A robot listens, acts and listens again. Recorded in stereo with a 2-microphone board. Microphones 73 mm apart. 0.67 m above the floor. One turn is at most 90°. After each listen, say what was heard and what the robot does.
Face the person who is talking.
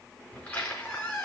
Keep listening.
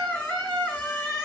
Keep listening.
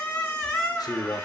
The man speaking: about 65° left or 115° left. Turn 65° left.
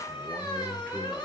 So it is at 20° left. Turn 20° left.
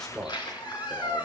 The man speaking is now 10° left. Turn 10° left.
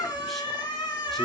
Keep listening.
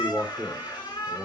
Facing the man speaking, 2 to 4 m away.